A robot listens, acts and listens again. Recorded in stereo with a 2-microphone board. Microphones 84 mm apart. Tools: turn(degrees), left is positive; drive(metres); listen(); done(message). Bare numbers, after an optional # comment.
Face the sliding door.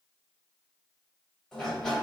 turn(30)
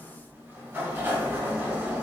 # So it is at 20° right.
turn(-20)
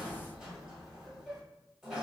done("Facing the sliding door, 1 to 2 m away.")